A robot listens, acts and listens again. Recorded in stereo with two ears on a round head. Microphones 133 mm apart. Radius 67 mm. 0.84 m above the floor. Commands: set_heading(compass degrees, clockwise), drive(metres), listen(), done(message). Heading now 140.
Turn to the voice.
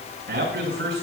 set_heading(230)
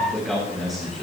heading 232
done("Facing the man speaking.")